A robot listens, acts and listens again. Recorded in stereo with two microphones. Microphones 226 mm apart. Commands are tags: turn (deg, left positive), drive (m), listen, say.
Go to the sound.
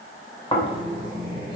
<turn deg="20"/>
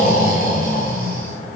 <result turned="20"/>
<turn deg="135"/>
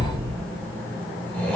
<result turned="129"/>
<drive m="1.0"/>
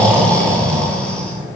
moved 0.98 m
<drive m="1.0"/>
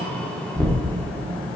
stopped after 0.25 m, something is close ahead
<say>I am next to the snoring.</say>